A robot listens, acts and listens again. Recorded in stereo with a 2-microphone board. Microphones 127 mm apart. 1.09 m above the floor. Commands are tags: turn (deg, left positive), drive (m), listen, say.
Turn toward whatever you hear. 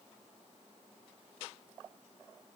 <listen/>
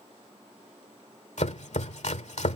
<turn deg="65"/>
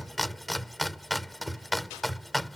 <say>Facing the chopping.</say>